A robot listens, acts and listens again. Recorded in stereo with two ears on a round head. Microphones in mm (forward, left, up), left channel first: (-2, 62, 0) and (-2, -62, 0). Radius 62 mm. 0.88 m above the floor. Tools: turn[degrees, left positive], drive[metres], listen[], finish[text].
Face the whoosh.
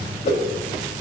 Thought: The whoosh: about 50° left or 130° left.
Action: turn[50]
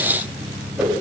Action: listen[]
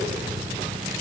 Action: listen[]
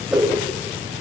Action: finish[Found it: a whoosh, straight ahead, 2 to 4 m away.]